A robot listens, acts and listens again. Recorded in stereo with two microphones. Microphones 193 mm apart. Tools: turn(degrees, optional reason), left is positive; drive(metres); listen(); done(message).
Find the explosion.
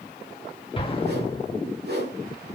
turn(degrees=30, reason="The explosion: about 30° left or 150° left.")
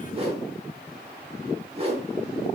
listen()
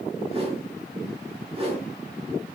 done("I heard an explosion, but can't make it out now. It was about straight ahead or 120° left.")